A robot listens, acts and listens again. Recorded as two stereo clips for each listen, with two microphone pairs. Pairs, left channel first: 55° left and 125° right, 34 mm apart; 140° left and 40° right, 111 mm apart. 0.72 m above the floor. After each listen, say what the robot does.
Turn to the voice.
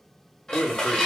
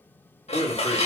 Turn 75° left.
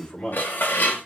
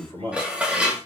Found it: a man speaking, straight ahead, 2 to 4 m away.